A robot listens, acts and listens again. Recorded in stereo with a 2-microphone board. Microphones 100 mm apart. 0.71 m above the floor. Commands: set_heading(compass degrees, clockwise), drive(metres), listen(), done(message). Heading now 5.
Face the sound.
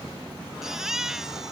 set_heading(35)
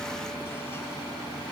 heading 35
listen()
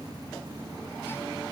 listen()
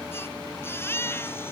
set_heading(10)
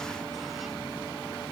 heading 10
listen()
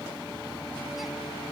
listen()
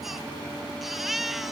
done("Facing the baby crying.")